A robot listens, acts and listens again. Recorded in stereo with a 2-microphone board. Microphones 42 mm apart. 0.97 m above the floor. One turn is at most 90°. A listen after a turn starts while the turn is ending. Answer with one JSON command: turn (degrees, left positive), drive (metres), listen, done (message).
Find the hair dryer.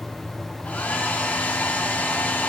{"turn": 40}
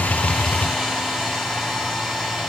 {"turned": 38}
{"done": "Found it: a hair dryer, straight ahead, 2 to 4 m away."}